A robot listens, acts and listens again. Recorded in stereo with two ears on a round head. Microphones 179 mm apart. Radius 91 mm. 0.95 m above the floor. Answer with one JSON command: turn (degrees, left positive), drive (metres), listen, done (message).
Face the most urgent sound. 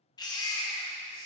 {"turn": 20}
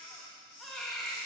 {"done": "Facing the baby crying, under 1 m away."}